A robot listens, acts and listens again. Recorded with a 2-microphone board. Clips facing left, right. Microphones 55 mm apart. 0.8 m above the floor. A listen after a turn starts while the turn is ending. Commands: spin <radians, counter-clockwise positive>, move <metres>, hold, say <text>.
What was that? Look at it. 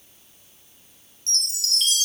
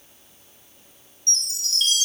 spin 1.57
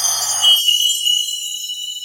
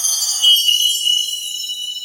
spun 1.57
spin 0.17
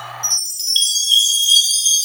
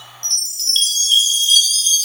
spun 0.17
say Facing the chime.